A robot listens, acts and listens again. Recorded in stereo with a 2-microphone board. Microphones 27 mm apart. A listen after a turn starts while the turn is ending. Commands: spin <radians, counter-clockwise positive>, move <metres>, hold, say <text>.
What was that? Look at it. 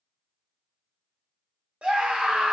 spin -0.79
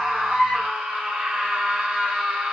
spin -1.40
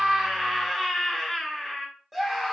spin -0.17
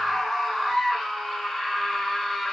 say Facing the scream.